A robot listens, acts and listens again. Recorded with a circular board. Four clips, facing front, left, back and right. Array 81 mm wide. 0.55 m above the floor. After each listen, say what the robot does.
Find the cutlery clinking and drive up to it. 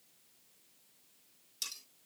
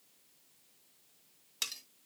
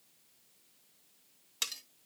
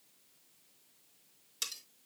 Turn 155° left.
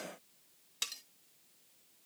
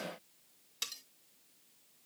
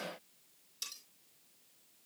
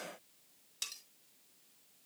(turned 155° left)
Turn 15° left.
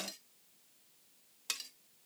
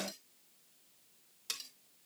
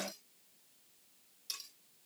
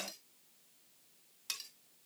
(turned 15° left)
Drive 1.0 m forward.
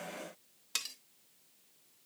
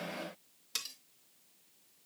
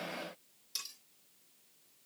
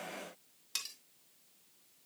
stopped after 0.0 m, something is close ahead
Something is in my way. I am facing the cutlery clinking but have not reached it.